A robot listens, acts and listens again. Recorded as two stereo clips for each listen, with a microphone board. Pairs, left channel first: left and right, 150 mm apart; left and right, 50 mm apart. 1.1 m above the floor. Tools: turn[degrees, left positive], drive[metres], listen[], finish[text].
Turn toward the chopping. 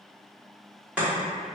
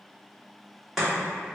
Action: turn[-30]
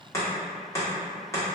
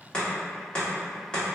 Thought: So it is at 20° left.
Action: turn[20]
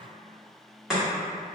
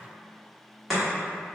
Action: finish[Facing the chopping, 1 to 2 m away.]